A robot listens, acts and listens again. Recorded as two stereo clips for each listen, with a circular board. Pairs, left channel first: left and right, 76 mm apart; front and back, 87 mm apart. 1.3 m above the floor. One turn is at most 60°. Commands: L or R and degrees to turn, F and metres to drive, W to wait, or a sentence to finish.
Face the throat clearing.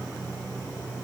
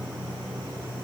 W
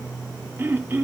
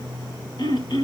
R30
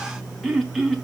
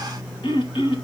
Found it: throat clearing, straight ahead.